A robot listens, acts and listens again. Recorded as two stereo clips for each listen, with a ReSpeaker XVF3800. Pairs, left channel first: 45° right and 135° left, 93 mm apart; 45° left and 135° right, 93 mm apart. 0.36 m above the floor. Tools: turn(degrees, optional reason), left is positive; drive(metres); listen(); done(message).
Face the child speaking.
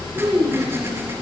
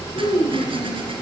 turn(degrees=60, reason="The child speaking: 60° left.")
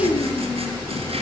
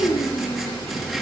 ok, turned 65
listen()
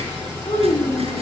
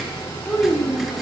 turn(degrees=-40, reason="The child speaking is now 40° right.")
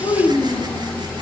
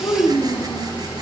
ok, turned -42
turn(degrees=-15, reason="The child speaking is now 15° right.")
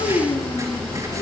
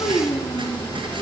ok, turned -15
turn(degrees=-20, reason="The child speaking is now 20° right.")
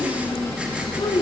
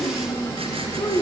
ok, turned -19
done("Found it: a child speaking, straight ahead.")